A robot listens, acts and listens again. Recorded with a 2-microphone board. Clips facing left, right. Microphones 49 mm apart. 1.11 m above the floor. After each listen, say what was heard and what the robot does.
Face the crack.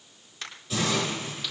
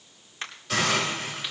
The crack: about 30° right or 150° right. Turn 30° right.
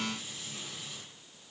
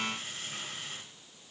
Keep listening.
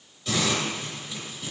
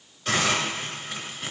I heard a crack, but can't make it out now. It was about straight ahead or 120° right.